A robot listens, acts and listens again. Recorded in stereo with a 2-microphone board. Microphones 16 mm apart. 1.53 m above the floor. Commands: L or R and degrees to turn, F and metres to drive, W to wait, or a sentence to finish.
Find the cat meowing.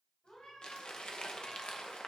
L75
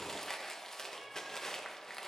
W
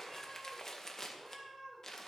R15
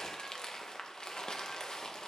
W
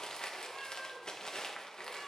Found it: a cat meowing, straight ahead.